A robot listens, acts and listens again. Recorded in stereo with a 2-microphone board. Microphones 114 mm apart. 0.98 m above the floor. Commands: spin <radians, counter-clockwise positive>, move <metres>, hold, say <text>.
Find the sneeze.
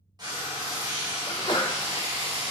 spin 0.70
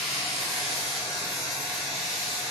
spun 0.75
hold
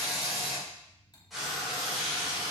say I heard a sneeze, but can't make it out now. It was about straight ahead or 95° left.